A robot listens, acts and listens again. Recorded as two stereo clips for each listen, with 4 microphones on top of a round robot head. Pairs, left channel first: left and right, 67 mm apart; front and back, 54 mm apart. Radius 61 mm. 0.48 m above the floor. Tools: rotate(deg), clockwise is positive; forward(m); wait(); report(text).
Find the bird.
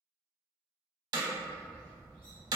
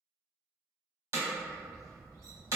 rotate(-165)
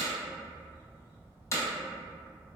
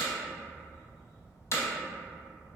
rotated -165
rotate(35)
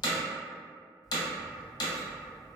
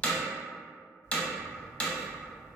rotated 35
report("Facing the bird.")